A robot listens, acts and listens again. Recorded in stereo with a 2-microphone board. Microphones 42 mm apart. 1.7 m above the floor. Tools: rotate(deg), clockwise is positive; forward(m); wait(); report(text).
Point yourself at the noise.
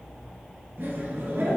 rotate(55)
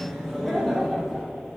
rotate(-10)
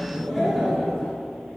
rotate(-10)
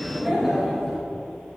report("Facing the laughter, 2 to 4 m away.")